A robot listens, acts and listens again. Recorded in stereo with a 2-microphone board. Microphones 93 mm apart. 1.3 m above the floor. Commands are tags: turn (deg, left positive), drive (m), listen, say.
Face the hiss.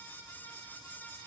<listen/>
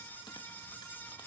<listen/>
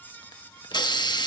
<turn deg="50"/>
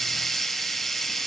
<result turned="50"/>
<say>Facing the hiss, 1 to 2 m away.</say>